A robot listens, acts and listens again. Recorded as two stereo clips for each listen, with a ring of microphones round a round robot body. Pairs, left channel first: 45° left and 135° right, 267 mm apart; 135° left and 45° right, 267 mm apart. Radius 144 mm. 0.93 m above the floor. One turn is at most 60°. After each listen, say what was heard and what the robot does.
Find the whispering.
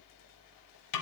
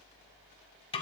Keep listening.
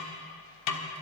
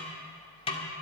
Keep listening.
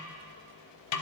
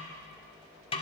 I can't make out whispering, only a snare drum.